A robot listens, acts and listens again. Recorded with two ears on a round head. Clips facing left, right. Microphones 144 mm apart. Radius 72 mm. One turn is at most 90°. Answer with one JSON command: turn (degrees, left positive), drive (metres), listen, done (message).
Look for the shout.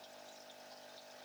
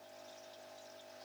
{"listen": true}
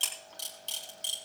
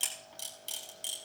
{"listen": true}
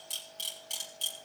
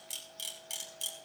{"done": "I can't make out a shout to turn to."}